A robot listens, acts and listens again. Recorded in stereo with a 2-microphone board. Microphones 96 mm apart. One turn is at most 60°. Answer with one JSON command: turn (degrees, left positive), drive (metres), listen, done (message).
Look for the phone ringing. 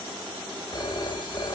{"turn": 50}
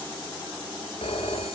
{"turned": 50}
{"turn": 60}
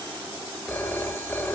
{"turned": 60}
{"turn": 20}
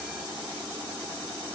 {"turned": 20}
{"listen": true}
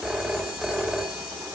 {"done": "Facing the phone ringing, 2 to 4 m away."}